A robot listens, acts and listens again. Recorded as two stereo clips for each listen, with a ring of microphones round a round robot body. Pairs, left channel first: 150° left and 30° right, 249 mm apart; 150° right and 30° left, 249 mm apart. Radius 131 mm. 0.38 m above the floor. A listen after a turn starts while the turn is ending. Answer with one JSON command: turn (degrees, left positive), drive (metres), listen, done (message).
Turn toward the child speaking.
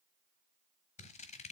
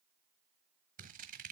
{"listen": true}
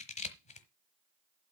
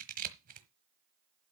{"listen": true}
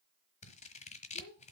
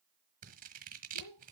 {"turn": -155}
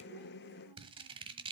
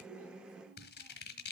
{"listen": true}
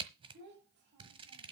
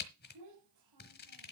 {"turn": 20}
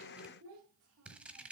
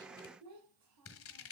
{"done": "Found it: a child speaking, straight ahead."}